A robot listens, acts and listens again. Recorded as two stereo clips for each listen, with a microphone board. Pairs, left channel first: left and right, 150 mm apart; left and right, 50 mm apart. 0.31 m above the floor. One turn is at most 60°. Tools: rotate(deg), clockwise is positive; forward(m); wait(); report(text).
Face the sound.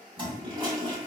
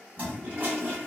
rotate(30)
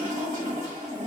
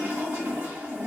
rotate(60)
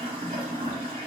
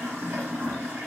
rotate(50)
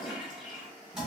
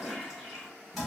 report("Facing the toilet flushing.")